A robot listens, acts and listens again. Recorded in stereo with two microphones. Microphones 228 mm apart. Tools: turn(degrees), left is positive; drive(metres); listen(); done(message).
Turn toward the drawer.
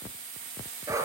listen()
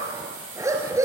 listen()
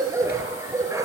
done("I can't make out a drawer, only a dog barking.")